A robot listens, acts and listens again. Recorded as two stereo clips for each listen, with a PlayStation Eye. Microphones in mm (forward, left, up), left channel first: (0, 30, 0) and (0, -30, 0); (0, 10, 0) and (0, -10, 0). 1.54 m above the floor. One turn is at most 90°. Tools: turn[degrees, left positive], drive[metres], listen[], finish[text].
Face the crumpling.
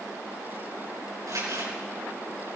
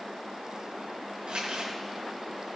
Action: turn[-90]
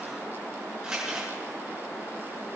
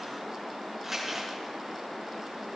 Thought: So it is at 15° right.
Action: turn[-15]
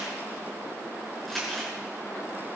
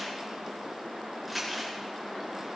Action: finish[Found it: crumpling, straight ahead, over 4 m away.]